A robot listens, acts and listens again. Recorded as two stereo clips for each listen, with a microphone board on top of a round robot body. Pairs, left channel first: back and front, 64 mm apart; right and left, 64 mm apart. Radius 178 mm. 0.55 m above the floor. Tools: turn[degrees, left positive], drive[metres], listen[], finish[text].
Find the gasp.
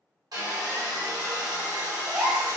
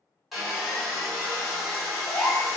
Thought: The gasp: 70° right.
Action: turn[-70]
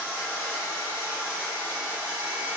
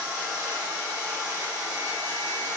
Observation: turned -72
Action: finish[I heard a gasp from this way, but can't make it out now.]